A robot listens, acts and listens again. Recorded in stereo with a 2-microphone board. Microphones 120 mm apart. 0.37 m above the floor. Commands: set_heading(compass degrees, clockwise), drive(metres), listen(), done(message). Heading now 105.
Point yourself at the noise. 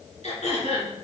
set_heading(40)
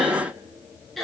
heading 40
done("Facing the throat clearing.")